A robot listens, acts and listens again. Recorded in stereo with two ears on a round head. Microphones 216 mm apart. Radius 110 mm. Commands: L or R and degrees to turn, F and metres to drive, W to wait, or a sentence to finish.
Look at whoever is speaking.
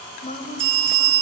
L35
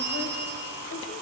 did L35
W
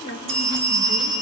L110
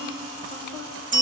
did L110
L25
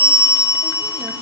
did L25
W
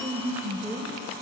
R10
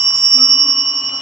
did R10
W
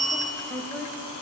Found it: a woman speaking, straight ahead, 2 to 4 m away.